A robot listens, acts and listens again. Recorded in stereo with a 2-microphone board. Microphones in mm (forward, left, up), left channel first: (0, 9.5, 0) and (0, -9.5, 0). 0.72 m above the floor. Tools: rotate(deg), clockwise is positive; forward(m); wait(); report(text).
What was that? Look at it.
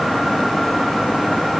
wait()
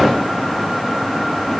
wait()
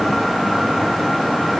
report("I can't make out anything.")